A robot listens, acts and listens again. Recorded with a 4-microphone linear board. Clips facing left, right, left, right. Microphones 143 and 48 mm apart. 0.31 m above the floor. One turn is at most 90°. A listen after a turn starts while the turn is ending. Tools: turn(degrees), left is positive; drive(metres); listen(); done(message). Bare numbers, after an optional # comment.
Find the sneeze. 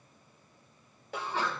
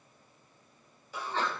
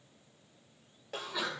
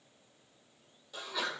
turn(30)
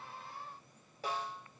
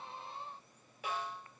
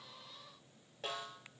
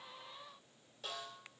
listen()
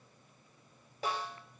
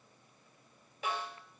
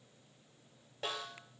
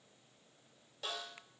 done("I heard a sneeze, but can't make it out now. It was about 15° right or 135° left.")